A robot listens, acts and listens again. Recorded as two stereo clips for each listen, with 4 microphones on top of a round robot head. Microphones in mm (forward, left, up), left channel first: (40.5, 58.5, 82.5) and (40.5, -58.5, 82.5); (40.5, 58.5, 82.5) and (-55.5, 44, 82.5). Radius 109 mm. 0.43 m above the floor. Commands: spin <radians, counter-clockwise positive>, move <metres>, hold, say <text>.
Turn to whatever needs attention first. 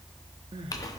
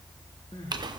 spin -0.79
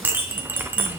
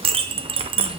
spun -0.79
hold
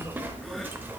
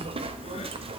hold
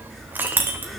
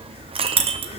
say I heard crying from this way, but can't make it out now.